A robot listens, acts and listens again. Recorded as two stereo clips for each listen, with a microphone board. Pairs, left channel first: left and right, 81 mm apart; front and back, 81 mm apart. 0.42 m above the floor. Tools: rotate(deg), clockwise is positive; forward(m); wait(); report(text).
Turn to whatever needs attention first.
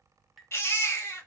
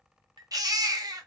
rotate(-145)
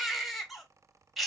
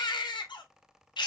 report("Found it: a baby crying, straight ahead.")